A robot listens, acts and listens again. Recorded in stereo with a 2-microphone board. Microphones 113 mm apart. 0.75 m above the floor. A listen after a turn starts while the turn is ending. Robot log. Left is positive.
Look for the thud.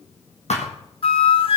cmd yaw +90
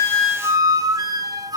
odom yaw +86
end: I heard a thud from this way, but can't make it out now.